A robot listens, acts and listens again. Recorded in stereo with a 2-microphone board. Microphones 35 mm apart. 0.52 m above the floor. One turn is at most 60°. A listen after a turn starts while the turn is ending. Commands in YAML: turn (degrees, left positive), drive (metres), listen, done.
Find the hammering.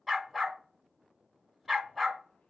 listen: true
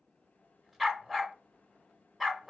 listen: true
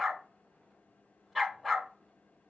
done: "I can't make out hammering to turn to."